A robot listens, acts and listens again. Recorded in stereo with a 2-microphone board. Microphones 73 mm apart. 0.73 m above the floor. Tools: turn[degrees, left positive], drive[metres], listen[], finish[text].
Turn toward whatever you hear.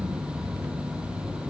Action: listen[]
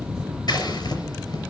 Thought: The scissors: about 65° left or 115° left.
Action: turn[65]
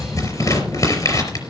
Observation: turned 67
Thought: So it is at 45° left.
Action: turn[45]
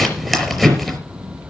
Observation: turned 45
Action: finish[Found it: scissors, straight ahead, over 4 m away.]